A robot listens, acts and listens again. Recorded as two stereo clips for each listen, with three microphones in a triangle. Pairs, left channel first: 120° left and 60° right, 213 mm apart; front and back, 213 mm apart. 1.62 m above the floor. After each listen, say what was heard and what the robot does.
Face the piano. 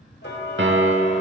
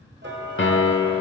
The piano: 30° right. Turn 30° right.
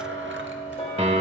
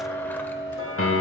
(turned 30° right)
Facing the piano, under 1 m away.